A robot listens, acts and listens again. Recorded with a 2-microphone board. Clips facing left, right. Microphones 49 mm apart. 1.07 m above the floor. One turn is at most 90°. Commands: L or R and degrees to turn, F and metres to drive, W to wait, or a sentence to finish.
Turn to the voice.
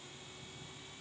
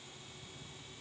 W
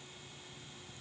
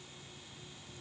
W
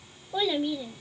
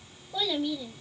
L25
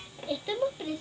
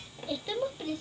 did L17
L10
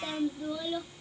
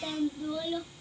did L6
Facing the child speaking.